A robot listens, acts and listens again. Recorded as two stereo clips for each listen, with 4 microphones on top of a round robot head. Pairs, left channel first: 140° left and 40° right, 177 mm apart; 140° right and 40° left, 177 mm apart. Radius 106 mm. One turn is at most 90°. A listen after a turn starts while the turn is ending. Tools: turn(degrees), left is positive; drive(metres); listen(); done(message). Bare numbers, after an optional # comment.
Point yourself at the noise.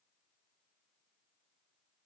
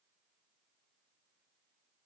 listen()
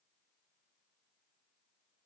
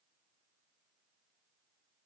listen()
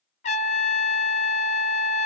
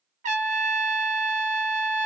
# The trumpet: 90° left.
turn(90)
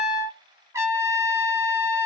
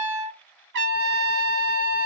# The trumpet is now 35° left.
turn(35)
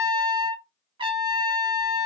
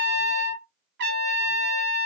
# The trumpet is now 20° left.
turn(20)
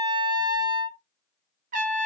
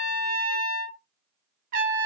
done("Facing the trumpet.")